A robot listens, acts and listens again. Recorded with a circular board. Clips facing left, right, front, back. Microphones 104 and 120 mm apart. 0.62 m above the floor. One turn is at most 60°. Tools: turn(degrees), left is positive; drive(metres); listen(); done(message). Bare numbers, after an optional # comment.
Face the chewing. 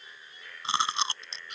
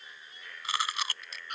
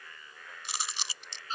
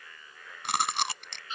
# The chewing: 155° left.
turn(60)
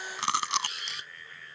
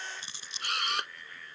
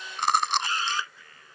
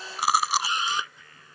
# The chewing is now 95° left.
turn(60)
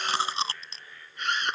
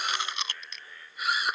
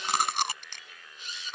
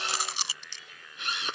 # The chewing is now 35° left.
turn(35)
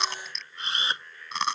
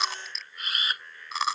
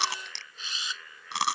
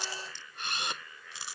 done("Found it: chewing, straight ahead.")